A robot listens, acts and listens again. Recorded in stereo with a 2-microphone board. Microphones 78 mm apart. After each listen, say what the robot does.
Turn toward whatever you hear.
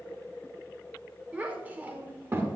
Turn 30° right.
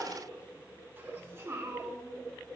Turn 35° right.
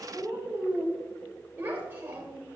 Turn 25° right.
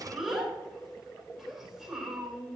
Facing the child speaking, 2 to 4 m away.